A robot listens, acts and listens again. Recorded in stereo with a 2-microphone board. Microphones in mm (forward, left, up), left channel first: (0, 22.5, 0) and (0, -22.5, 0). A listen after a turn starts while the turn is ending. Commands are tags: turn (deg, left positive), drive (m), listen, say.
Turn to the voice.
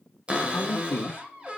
<turn deg="45"/>
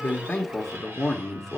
<say>Facing the man speaking.</say>